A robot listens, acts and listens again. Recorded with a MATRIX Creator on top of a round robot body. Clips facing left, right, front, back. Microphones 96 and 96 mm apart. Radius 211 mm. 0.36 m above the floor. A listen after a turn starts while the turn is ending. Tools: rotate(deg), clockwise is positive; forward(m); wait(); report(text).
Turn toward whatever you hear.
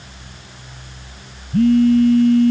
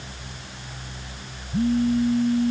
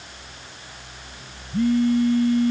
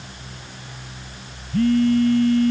rotate(-80)
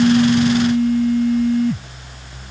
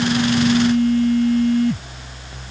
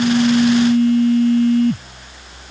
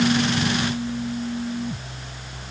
report("Found it: a phone buzzing, straight ahead.")